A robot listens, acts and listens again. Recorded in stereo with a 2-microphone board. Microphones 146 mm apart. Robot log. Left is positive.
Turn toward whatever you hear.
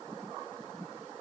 cmd idle
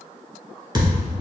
note: The thud: about 30° right or 150° right.
cmd yaw -30
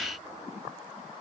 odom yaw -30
cmd idle
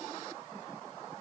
end: I heard a thud, but can't make it out now. It was about straight ahead or 120° right.